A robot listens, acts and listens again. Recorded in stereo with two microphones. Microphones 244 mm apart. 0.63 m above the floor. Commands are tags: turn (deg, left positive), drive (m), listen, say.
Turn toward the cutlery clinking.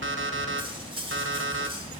<turn deg="-20"/>
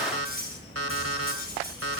<turn deg="-135"/>
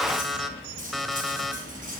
<turn deg="-35"/>
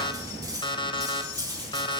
<turn deg="-15"/>
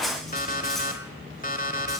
<listen/>
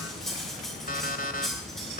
<say>Facing the cutlery clinking, 2 to 4 m away.</say>